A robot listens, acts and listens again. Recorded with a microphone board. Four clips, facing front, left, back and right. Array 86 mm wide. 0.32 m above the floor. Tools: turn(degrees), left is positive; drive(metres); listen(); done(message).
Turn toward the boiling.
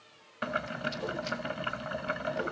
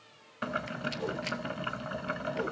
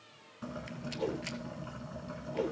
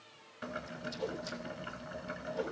turn(degrees=35)
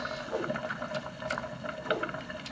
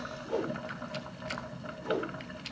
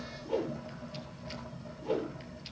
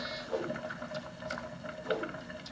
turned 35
done("Found it: boiling, straight ahead.")